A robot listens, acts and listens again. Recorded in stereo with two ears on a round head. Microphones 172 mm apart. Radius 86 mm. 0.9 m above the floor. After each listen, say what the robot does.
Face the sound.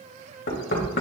Turn 55° left.
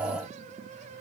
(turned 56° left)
Keep listening.
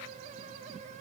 Keep listening.
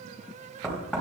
Facing the knocking.